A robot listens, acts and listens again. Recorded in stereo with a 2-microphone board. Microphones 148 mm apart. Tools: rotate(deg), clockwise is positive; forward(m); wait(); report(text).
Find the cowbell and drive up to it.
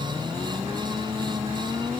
wait()
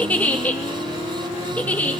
wait()
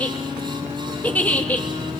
report("I can't make out a cowbell, only a giggle.")